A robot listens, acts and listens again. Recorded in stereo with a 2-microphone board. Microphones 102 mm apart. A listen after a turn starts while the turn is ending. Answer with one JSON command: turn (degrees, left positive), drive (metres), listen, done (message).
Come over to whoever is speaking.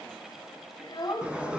{"turn": 45}
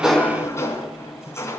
{"listen": true}
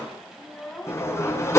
{"drive": 1.0}
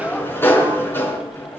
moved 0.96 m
{"listen": true}
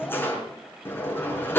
{"listen": true}
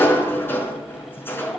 {"done": "I heard a child speaking from this way, but can't make it out now. I did not reach it."}